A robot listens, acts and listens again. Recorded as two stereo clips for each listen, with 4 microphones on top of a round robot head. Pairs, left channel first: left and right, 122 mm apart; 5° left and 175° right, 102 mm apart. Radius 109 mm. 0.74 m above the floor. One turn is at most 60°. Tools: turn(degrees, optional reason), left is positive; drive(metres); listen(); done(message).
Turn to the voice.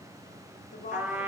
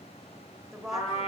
turn(degrees=60, reason="The woman speaking: 95° left.")
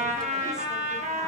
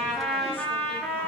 turn(degrees=35, reason="Nothing new. It was at 35° left.")
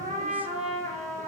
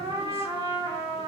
listen()
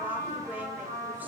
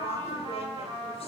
done("Facing where the woman speaking came from. I can't hear it now.")